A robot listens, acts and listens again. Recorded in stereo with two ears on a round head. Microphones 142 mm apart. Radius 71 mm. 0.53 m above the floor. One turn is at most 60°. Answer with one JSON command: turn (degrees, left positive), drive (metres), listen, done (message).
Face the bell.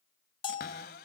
{"turn": 30}
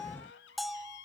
{"done": "Found it: a bell, straight ahead."}